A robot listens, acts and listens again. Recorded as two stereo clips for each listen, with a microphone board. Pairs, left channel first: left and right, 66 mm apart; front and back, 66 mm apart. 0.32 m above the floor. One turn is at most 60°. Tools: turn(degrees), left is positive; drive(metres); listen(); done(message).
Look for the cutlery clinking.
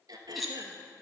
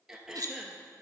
turn(degrees=60)
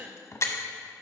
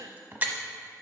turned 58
turn(degrees=60)
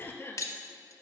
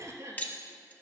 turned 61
turn(degrees=60)
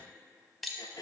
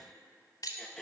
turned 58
done("Found it: cutlery clinking, straight ahead, 1 to 2 m away.")